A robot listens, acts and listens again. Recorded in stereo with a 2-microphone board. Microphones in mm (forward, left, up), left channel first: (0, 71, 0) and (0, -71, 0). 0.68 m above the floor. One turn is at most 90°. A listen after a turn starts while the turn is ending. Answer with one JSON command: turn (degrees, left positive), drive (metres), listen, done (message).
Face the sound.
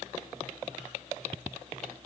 {"listen": true}
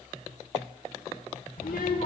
{"turn": 90}
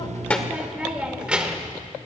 {"done": "Facing the child speaking, 1 to 2 m away."}